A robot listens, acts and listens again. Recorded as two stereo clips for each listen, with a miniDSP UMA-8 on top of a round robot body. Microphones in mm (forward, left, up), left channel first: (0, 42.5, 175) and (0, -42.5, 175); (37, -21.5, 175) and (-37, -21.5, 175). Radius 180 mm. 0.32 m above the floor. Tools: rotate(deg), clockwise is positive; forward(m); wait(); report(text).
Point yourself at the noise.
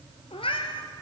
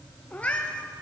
rotate(-75)
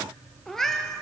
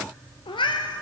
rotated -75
report("Facing the cat meowing.")